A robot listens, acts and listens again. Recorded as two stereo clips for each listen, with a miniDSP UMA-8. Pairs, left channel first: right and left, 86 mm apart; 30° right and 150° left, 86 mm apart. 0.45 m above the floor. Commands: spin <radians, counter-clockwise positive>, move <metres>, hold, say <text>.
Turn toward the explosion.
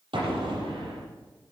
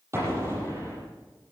spin 1.57
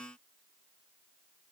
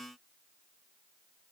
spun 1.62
say I heard an explosion from this way, but can't make it out now.